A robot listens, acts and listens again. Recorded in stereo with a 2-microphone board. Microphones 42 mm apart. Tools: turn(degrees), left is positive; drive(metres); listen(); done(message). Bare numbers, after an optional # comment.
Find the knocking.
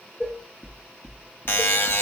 # The knocking: about 30° right or 150° right.
turn(-30)
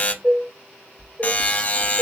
# So it is at 115° right.
turn(-115)
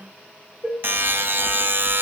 listen()
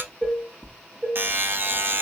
done("Found it: knocking, straight ahead.")